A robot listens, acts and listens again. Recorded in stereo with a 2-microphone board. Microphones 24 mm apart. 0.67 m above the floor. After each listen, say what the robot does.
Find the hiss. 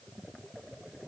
Keep listening.
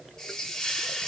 Turn 25° left.
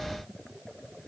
Keep listening.
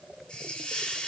Turn 130° left.
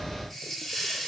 Turn 10° left.
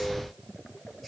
Keep listening.
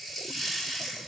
Facing the hiss.